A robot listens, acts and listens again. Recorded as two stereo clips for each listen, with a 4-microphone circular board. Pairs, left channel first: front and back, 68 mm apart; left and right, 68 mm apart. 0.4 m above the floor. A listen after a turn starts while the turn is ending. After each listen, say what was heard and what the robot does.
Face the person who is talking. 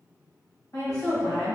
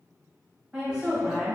Found it: a woman speaking, straight ahead, 1 to 2 m away.